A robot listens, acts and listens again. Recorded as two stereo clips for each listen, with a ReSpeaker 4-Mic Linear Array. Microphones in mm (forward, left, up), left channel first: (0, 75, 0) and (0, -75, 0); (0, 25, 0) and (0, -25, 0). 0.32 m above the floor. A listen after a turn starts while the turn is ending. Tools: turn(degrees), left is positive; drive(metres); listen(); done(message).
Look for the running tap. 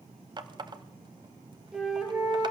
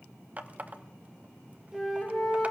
turn(degrees=-30)
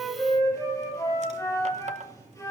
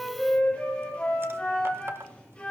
listen()
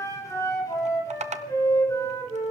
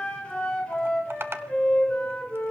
turn(degrees=-115)
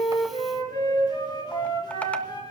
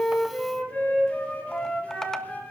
listen()
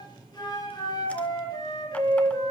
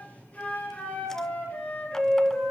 listen()
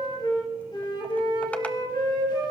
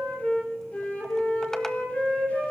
done("Facing where the running tap came from. I can't hear it now.")